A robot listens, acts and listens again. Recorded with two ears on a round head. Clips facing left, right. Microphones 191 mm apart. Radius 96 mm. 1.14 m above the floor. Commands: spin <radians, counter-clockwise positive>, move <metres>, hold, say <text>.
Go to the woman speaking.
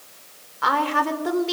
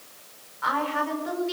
spin 1.13
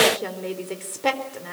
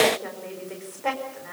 spin 0.87
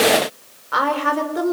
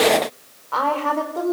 spin 0.26
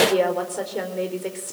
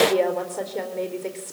move 1.0
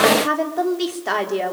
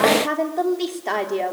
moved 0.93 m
move 1.0
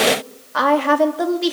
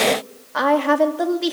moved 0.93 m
move 1.0
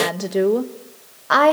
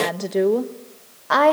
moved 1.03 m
move 1.0
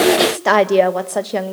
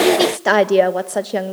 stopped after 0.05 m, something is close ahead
say Arrived at the woman speaking, straight ahead.